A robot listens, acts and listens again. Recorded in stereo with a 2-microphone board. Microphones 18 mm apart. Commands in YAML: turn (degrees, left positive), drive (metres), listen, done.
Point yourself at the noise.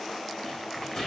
turn: 35
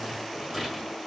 done: "Found it: a rattle, straight ahead, over 4 m away."